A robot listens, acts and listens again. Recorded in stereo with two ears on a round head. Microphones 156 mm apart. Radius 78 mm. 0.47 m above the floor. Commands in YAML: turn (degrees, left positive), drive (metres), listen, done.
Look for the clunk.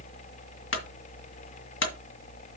turn: 90
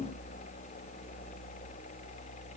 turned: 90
done: "I heard a clunk from this way, but can't make it out now."